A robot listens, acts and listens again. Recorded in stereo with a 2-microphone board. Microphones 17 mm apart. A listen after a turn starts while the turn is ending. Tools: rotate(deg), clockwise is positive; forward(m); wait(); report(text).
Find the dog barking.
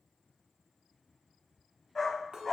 rotate(-30)
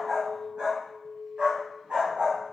rotate(70)
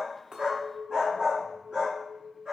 rotate(45)
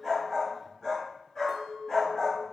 rotate(-20)
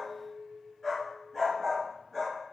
report("Facing the dog barking.")